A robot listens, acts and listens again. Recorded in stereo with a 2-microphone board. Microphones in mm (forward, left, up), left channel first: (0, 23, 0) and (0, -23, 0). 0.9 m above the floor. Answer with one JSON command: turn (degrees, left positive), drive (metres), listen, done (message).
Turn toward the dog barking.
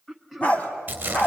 {"turn": 40}
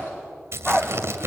{"turn": 10}
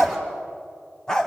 {"turn": 10}
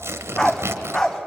{"turn": 15}
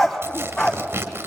{"done": "Found it: a dog barking, straight ahead."}